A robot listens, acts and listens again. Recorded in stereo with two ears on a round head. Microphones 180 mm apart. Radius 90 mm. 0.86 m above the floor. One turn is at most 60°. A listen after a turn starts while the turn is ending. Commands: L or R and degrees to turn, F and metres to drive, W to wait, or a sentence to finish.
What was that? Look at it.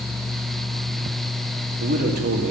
R50
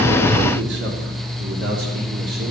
R55
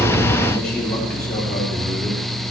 Found it: a man speaking, straight ahead, 2 to 4 m away.